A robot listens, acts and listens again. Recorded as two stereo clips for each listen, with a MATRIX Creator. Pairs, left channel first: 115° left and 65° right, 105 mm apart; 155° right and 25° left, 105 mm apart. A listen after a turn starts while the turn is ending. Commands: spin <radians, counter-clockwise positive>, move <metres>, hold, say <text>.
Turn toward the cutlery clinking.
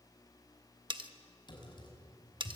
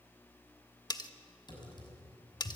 spin -1.92
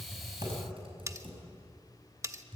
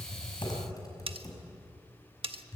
say Facing the cutlery clinking.